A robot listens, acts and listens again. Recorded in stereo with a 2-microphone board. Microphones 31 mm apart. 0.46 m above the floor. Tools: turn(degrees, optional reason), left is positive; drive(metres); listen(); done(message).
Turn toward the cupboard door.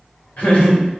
listen()
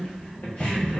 turn(degrees=30)
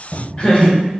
turn(degrees=135, reason="So it is at 135° left.")
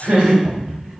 done("Found it: a cupboard door, straight ahead, under 1 m away.")